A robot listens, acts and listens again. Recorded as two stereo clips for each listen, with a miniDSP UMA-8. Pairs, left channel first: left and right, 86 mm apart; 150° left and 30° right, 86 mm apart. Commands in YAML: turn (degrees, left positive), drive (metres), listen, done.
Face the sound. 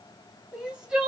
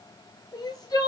turn: -170
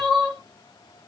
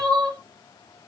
done: "Found it: crying, straight ahead."